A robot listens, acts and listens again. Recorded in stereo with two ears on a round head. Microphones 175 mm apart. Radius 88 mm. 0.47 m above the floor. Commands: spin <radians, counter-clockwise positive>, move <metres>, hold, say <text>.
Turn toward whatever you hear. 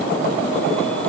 hold
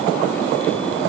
hold
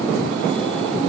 say I can't make out anything.